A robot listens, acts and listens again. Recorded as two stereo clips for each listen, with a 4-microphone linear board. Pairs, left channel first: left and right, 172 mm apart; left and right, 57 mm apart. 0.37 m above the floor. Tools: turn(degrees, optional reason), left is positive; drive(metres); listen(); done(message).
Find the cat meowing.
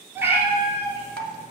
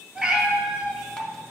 turn(degrees=-30)
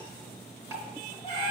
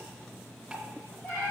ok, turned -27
turn(degrees=25, reason="So it is at 25° left.")
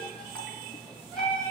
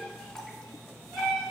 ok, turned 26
done("Found it: a cat meowing, straight ahead, 2 to 4 m away.")